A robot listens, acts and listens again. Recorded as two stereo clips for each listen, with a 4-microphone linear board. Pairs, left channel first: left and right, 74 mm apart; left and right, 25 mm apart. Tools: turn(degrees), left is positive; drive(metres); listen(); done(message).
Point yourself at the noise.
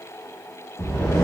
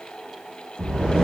turn(degrees=35)
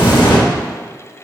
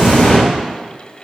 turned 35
turn(degrees=110)
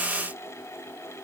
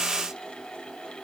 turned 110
done("I heard an explosion from this way, but can't make it out now.")